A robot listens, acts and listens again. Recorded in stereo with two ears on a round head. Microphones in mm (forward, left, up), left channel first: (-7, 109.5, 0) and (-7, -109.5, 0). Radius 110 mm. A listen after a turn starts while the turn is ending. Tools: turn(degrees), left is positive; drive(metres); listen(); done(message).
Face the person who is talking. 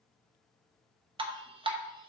listen()
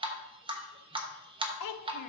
turn(degrees=90)
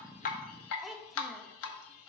done("Facing the child speaking.")